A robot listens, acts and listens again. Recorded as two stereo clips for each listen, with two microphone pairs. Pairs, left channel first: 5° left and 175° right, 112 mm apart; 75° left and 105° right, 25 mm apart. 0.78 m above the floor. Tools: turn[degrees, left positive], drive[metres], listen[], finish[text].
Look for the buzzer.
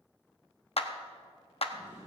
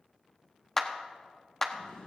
Action: listen[]
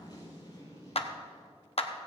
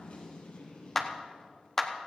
Action: listen[]
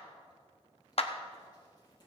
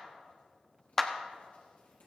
Action: finish[I can't make out a buzzer, only a zipper and a clap.]